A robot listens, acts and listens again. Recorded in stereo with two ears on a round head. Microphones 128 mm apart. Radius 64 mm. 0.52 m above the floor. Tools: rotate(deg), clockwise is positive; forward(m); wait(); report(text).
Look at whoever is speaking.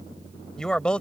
rotate(-30)
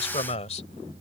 rotate(-130)
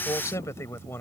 rotate(-15)
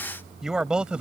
rotate(10)
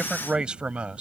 rotate(10)
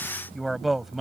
report("Found it: a man speaking, straight ahead.")